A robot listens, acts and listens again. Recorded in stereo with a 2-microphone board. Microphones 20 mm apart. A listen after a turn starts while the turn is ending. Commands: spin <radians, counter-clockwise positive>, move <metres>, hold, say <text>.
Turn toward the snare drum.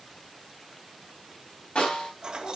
spin 1.22
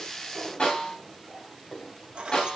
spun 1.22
spin 0.70
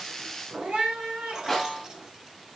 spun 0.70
say Facing the snare drum, over 4 m away.